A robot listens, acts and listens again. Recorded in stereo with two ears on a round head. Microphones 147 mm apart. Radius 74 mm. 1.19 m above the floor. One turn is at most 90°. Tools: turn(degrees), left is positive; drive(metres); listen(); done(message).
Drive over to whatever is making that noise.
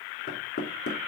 turn(degrees=60)
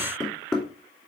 drive(metres=1.0)
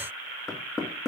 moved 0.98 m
drive(metres=1.0)
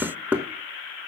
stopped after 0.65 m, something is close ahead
turn(degrees=-10)
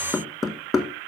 done("I am next to the knocking.")